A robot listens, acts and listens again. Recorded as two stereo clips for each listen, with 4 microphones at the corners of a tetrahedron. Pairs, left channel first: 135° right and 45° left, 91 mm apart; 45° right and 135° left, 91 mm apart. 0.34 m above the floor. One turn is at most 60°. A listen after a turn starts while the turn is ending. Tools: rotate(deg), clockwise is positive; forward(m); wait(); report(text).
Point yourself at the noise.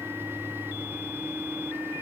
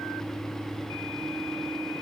wait()
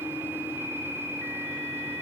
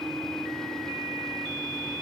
wait()
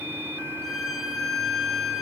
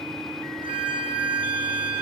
rotate(-60)
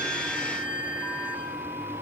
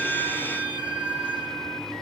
rotate(-60)
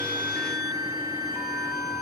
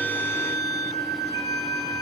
report("Found it: a violin, straight ahead.")